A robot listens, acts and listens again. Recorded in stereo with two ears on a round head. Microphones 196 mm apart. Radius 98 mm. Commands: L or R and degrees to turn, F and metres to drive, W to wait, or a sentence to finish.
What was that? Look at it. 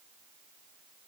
W
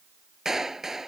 L30
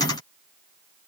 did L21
W
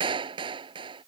R20
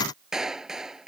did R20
Facing the clap.